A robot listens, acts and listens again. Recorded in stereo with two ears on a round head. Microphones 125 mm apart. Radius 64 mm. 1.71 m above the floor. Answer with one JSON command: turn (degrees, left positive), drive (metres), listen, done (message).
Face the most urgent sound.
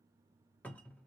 {"listen": true}
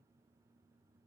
{"listen": true}
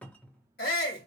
{"turn": 90}
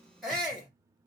{"done": "Found it: a shout, straight ahead."}